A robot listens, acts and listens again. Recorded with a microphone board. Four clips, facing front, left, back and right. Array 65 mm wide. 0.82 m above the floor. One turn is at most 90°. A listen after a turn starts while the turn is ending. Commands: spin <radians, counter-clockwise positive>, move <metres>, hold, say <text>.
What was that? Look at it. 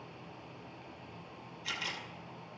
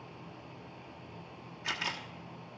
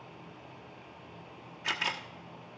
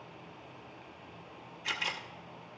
spin 1.57
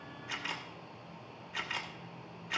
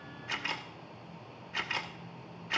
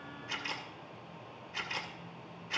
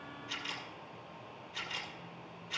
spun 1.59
spin 1.22
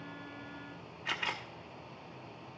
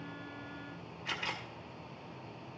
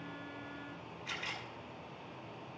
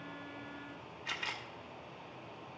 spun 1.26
say Found it: a camera shutter, straight ahead.